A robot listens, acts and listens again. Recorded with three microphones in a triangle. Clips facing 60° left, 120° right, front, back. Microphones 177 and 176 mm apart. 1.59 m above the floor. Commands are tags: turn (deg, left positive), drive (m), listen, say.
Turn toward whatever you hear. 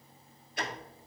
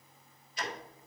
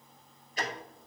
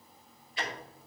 <turn deg="45"/>
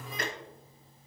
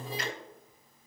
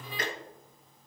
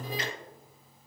<turn deg="30"/>
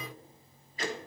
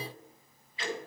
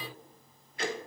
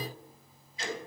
<turn deg="15"/>
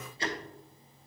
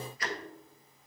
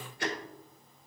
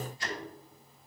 <say>Facing the ticking.</say>